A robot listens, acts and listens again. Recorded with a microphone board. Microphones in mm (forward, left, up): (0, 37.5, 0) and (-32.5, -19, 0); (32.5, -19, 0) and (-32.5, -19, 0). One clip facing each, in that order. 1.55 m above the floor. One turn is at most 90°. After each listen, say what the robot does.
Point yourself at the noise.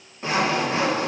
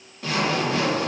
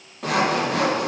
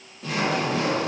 Found it: sawing, straight ahead.